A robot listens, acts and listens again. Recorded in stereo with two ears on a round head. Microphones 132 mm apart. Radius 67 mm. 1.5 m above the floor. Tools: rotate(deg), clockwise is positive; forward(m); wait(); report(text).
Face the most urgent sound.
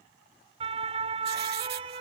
rotate(40)
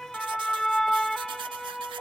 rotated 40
report("Facing the siren.")